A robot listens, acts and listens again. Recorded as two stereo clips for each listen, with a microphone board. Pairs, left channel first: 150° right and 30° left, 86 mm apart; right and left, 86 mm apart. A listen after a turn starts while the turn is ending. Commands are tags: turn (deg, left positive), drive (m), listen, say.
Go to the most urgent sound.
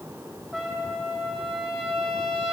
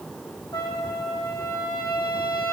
<listen/>
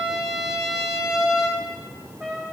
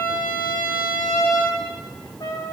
<listen/>
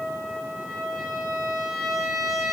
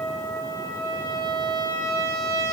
<say>I can't make out anything urgent, only a trumpet.</say>